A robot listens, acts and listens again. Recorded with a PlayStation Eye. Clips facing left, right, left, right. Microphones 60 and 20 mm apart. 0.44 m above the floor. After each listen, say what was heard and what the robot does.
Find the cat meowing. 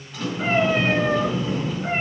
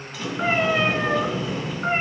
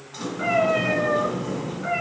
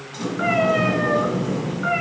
Turn 90° right.
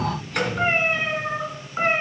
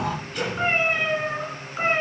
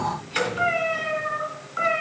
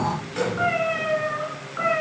So it is at 20° left. Turn 20° left.
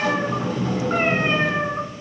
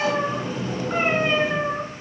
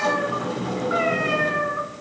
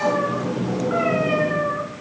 The cat meowing is now 25° left. Turn 25° left.
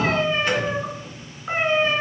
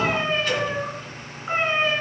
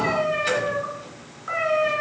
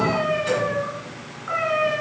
Facing the cat meowing.